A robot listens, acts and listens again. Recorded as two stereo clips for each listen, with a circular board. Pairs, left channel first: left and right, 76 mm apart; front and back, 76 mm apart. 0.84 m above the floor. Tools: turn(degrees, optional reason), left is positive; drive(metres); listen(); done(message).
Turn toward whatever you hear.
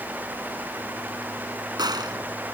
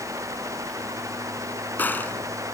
turn(degrees=-65, reason="The gunshot: 65° right.")
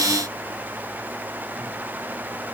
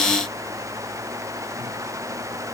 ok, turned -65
done("Facing where the gunshot came from. I can't hear it now.")